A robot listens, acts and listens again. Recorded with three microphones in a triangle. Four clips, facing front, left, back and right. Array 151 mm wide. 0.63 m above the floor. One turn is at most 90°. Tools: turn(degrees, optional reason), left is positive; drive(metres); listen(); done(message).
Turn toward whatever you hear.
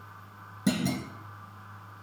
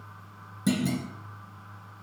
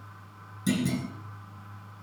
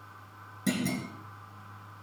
done("Facing the clunk, 2 to 4 m away.")